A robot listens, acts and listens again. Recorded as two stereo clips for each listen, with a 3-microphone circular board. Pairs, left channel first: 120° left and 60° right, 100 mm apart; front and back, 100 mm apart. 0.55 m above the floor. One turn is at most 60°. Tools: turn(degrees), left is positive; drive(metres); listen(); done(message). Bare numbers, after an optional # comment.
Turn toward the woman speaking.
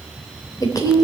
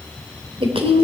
# The woman speaking: 170° left.
turn(60)
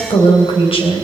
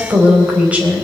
# The woman speaking is now 105° left.
turn(60)
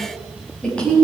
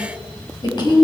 # The woman speaking is now 40° left.
turn(40)
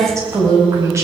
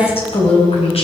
done("Facing the woman speaking.")